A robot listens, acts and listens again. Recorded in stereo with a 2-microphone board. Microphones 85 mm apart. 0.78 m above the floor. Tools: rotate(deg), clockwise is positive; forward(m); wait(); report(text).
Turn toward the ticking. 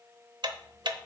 rotate(65)
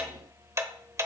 rotate(40)
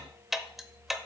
report("Found it: ticking, straight ahead.")